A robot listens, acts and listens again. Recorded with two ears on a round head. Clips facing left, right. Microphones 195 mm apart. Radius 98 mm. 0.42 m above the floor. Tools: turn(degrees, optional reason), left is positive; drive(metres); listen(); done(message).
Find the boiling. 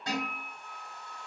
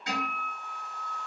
listen()
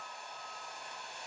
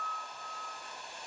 turn(degrees=-20, reason="The boiling: about 20° right or 160° right.")
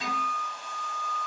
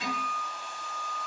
listen()
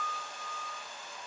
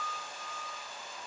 listen()
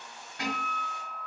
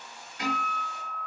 done("Facing the boiling, 1 to 2 m away.")